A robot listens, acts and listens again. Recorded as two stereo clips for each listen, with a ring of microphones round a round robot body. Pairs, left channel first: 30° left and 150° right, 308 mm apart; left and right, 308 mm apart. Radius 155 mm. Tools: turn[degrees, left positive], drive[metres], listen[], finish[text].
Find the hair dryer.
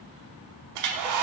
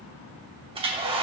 Thought: The hair dryer: 160° right.
Action: turn[-160]
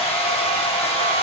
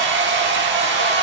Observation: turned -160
Thought: The hair dryer is now 40° right.
Action: turn[-40]
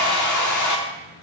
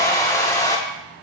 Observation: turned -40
Thought: The hair dryer is now 10° left.
Action: turn[10]
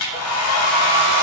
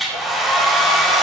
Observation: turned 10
Action: finish[Found it: a hair dryer, straight ahead, 1 to 2 m away.]